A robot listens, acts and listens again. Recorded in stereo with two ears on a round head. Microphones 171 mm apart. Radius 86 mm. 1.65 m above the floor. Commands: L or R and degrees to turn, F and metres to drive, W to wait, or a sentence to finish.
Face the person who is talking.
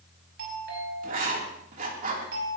W
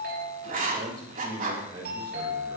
R25
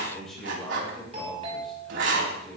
Found it: a man speaking, straight ahead, over 4 m away.